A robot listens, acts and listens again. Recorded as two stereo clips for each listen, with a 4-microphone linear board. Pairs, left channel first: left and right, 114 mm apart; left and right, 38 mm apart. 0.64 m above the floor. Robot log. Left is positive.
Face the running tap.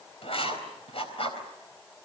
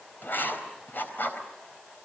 cmd idle
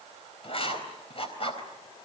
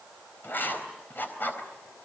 cmd idle
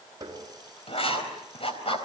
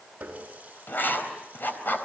note: The running tap: about 35° right or 145° right.
cmd yaw -35
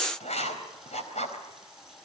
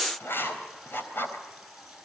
cmd idle
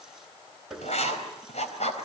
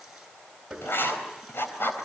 end: Facing the running tap, over 4 m away.